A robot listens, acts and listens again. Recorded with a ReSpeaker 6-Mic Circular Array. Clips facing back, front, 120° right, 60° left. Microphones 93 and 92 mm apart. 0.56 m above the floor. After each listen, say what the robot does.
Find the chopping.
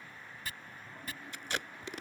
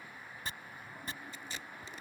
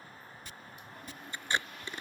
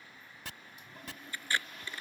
Turn 60° left.
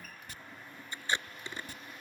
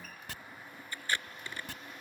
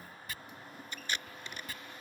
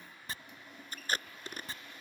Facing the chopping.